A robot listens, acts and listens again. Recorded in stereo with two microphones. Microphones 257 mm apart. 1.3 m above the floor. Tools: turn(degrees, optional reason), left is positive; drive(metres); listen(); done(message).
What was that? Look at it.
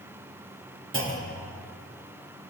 turn(degrees=-50, reason="The clunk: about 50° right or 130° right.")
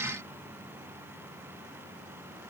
listen()
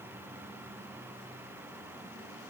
done("I heard a clunk, but can't make it out now. It was about straight ahead or 80° right.")